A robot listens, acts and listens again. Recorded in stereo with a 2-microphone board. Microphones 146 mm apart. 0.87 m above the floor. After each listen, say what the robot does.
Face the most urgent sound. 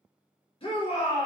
Turn 40° left.
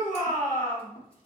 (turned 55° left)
Turn 85° left.
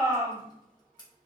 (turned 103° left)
Turn 20° right.
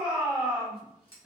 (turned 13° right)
Found it: a shout, straight ahead.